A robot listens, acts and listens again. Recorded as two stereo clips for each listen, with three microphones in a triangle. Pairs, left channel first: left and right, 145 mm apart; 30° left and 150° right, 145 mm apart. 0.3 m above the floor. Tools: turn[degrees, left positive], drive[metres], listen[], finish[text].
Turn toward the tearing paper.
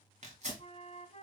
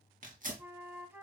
Thought: The tearing paper: 125° right.
Action: turn[-125]
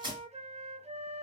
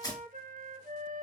Thought: The tearing paper is now 35° right.
Action: turn[-35]
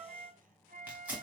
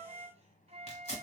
Thought: The tearing paper is now 10° right.
Action: turn[-10]
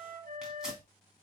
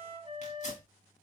Action: listen[]
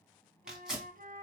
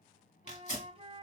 Action: finish[Facing the tearing paper.]